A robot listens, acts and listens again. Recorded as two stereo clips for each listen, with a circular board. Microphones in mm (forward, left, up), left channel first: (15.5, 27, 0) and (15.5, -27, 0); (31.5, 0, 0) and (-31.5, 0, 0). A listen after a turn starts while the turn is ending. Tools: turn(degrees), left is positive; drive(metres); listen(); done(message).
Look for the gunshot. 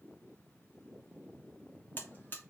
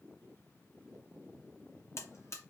listen()
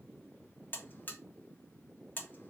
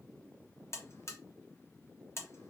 listen()
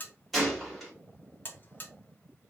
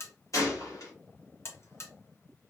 done("Facing the gunshot.")